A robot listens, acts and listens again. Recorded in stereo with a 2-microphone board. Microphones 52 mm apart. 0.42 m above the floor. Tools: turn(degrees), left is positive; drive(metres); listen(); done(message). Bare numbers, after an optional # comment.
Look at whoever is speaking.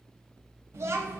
# The child speaking: about 65° right or 115° right.
turn(-65)
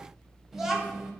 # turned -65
done("Found it: a child speaking, straight ahead.")